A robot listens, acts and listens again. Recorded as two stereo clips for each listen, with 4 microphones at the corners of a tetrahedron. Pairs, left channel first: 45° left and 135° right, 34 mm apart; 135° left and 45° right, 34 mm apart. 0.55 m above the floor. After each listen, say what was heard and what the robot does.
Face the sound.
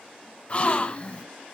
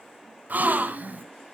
The gasp: 10° right. Turn 10° right.
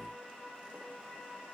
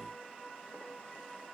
I heard a gasp from this way, but can't make it out now.